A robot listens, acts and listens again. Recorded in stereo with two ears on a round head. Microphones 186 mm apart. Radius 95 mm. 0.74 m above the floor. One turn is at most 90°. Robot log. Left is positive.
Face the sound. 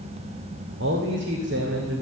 note: The man speaking: about 55° right or 125° right.
cmd yaw -55
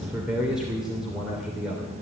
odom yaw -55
end: Facing the man speaking.